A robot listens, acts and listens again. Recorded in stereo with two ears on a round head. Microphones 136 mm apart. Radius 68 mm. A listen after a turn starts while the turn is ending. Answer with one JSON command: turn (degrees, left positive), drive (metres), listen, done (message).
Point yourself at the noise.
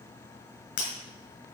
{"turn": 65}
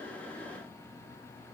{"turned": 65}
{"listen": true}
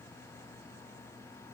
{"done": "I heard breaking glass, but can't make it out now. It was about straight ahead or 50° left."}